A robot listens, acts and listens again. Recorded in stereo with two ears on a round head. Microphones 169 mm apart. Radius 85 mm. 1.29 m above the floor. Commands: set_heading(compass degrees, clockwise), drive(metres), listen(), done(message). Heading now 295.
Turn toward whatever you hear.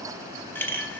set_heading(265)
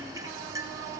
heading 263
listen()
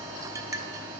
set_heading(283)
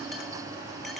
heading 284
listen()
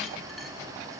listen()
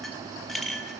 done("Found it: a clink, straight ahead, under 1 m away.")